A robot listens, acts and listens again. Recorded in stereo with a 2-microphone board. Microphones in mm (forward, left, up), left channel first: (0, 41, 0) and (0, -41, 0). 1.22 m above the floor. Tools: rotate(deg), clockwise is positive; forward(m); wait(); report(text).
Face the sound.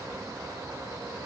wait()
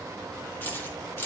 rotate(-30)
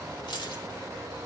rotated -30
rotate(-110)
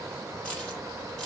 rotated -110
rotate(-10)
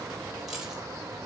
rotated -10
report("Facing the keys jangling, 2 to 4 m away.")